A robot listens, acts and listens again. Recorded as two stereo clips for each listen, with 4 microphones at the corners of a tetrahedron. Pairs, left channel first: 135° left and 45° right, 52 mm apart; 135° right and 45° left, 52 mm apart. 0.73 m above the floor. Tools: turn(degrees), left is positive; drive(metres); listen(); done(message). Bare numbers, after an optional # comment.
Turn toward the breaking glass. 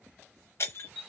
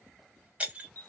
# The breaking glass: 110° left.
turn(110)
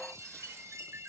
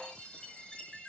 done("I heard breaking glass from this way, but can't make it out now.")